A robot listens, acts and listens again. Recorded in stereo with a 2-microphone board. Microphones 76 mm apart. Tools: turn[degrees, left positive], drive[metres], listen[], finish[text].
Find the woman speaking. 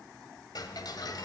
Action: listen[]
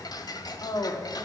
Thought: The woman speaking: about 60° left or 120° left.
Action: turn[60]
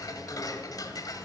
Action: listen[]
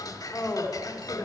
Thought: So it is at 30° left.
Action: turn[30]
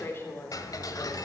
Thought: The woman speaking is now 35° left.
Action: turn[35]
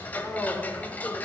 Action: listen[]
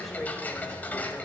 Action: listen[]
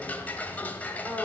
Action: finish[Facing the woman speaking, 2 to 4 m away.]